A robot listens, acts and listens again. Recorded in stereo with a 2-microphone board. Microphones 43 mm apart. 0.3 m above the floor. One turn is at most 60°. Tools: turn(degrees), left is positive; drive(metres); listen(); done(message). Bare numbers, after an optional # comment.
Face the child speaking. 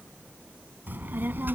# The child speaking: about 50° right or 130° right.
turn(-50)
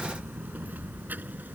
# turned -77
# So it is at 45° right.
turn(-45)
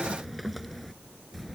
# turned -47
done("Found it: a child speaking, straight ahead.")